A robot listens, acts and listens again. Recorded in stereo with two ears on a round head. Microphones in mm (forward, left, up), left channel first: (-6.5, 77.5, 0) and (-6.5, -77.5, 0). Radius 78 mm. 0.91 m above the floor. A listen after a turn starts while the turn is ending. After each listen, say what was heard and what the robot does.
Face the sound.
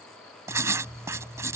The writing: about 15° right or 165° right. Turn 15° right.
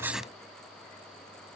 Facing the writing.